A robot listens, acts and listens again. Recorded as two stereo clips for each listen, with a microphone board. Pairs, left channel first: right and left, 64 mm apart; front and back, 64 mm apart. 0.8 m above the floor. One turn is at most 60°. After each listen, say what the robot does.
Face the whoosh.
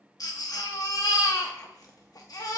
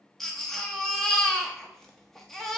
Keep listening.
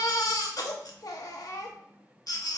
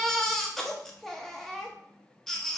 Keep listening.
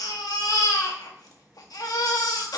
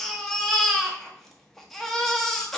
I can't make out a whoosh to turn to.